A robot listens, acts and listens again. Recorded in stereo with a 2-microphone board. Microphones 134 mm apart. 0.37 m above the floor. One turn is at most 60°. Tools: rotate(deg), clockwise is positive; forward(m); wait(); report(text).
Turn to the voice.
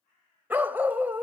wait()
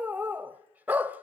wait()
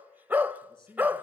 rotate(-35)
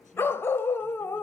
wait()
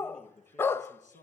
rotate(-60)
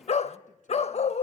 rotate(-50)
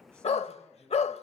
rotate(-10)
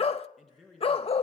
report("Facing the man speaking, 2 to 4 m away.")